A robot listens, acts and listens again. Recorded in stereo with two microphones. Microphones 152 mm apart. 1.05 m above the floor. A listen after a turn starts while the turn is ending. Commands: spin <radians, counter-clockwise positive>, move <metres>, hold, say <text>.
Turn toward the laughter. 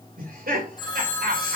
spin -1.22
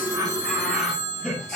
say Facing the laughter, over 4 m away.